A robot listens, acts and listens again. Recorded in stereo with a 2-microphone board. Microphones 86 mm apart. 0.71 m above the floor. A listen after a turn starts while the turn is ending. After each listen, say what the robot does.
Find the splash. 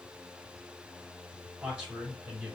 Keep listening.
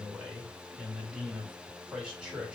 Keep listening.
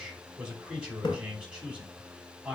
Turn 70° left.
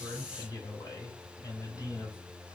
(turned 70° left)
Keep listening.
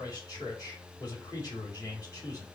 I heard a splash, but can't make it out now. It was about straight ahead or 40° left.